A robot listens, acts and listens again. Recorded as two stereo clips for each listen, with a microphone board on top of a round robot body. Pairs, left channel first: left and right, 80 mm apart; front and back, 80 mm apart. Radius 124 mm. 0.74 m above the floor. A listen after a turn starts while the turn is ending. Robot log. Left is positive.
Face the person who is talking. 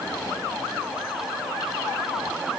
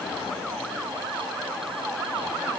cmd idle
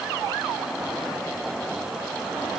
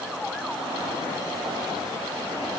cmd idle
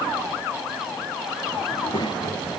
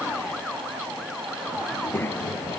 note: The child speaking: 65° left.
cmd yaw +65
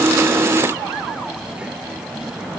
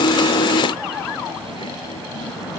note: The child speaking is now 10° right.
cmd yaw -10
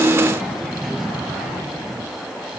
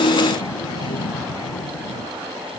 end: Found it: a child speaking, straight ahead.